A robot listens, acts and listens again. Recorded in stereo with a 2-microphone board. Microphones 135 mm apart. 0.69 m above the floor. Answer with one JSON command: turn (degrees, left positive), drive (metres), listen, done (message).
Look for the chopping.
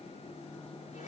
{"listen": true}
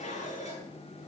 {"listen": true}
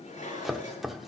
{"turn": 30}
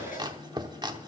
{"turn": -35}
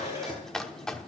{"done": "Found it: chopping, straight ahead, under 1 m away."}